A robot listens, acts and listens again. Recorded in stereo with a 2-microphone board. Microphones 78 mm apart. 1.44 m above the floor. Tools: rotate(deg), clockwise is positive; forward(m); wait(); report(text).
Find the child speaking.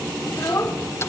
rotate(-45)
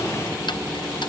wait()
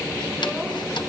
wait()
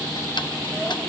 report("I heard a child speaking, but can't make it out now. It was about straight ahead or 90° left.")